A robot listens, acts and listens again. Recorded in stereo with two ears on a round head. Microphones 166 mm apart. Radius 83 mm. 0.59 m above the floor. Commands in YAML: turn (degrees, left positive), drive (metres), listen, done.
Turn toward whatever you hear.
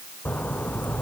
turn: 30
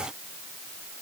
listen: true
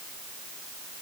done: "I heard a splash, but can't make it out now. It was about 20° right or 140° left."